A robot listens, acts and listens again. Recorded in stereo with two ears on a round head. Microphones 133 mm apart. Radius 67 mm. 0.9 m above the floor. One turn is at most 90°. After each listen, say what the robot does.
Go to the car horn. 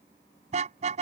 Turn 50° right.
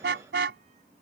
Turn 80° right.
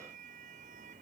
Keep listening.
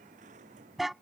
Drive 1.0 m forward.
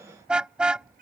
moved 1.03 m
Drive 1.0 m forward.
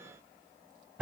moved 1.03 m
Turn 10° right.
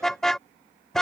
Drive 1.0 m forward.
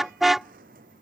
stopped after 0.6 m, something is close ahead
I am next to the car horn.